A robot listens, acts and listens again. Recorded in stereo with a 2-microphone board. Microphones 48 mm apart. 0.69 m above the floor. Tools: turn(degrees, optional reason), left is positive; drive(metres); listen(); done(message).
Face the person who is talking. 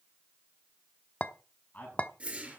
turn(degrees=35, reason="The man speaking: about 35° left or 145° left.")
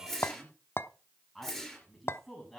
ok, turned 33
done("Facing the man speaking.")